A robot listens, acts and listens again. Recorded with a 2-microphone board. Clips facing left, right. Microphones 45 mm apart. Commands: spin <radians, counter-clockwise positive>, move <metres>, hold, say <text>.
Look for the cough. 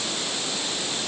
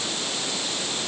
hold
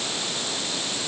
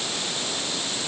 hold
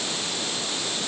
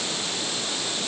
say I can't make out a cough.